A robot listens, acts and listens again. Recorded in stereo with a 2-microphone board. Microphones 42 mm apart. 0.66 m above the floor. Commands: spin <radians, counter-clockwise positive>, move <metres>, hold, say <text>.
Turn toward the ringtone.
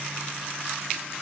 hold
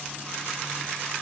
hold
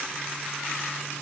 say I can't make out a ringtone to turn to.